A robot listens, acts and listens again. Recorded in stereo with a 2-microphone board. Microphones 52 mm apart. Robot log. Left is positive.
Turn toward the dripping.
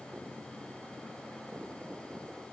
cmd idle
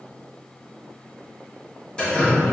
note: The dripping: about 15° left or 165° left.
cmd yaw +15
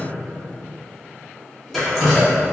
end: Facing the dripping, 1 to 2 m away.